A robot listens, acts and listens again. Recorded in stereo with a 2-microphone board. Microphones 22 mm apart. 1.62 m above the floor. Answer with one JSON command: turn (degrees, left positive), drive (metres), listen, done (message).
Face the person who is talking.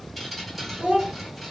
{"turn": -35}
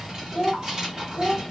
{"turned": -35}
{"turn": -105}
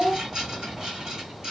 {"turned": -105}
{"done": "Found it: a child speaking, straight ahead."}